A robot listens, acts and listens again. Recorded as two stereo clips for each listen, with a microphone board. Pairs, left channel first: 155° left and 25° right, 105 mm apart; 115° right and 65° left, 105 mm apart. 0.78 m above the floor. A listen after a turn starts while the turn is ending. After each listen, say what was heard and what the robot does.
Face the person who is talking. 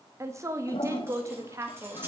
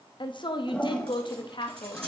The woman speaking: 80° right. Turn 80° right.
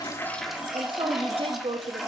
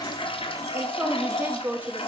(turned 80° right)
Facing the woman speaking, under 1 m away.